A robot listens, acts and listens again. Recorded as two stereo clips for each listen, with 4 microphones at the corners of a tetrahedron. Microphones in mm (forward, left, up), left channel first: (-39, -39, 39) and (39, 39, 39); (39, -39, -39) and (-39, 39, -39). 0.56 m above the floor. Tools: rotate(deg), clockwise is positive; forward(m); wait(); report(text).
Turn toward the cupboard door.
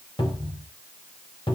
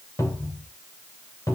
rotate(100)
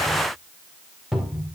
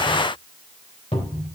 rotate(40)
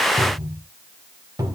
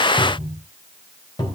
rotate(10)
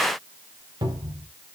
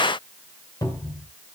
report("Found it: a cupboard door, straight ahead.")